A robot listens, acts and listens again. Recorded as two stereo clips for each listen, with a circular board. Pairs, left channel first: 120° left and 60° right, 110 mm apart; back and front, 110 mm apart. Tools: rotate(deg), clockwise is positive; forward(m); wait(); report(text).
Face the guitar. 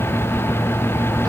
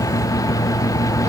wait()
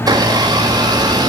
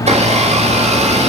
wait()
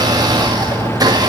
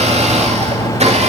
report("I can't make out a guitar, only a blender.")